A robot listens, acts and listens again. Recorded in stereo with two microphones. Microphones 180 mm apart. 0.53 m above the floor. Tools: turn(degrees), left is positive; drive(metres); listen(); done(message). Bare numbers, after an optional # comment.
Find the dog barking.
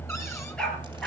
turn(30)
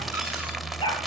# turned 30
# So it is at 155° left.
turn(155)
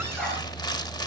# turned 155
listen()
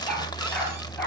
# The dog barking is now 10° left.
turn(10)
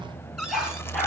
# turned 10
done("Found it: a dog barking, straight ahead, over 4 m away.")